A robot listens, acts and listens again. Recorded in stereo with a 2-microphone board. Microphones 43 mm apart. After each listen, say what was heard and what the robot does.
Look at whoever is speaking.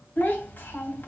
The child speaking: about 50° left or 130° left. Turn 50° left.
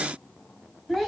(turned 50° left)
Facing the child speaking.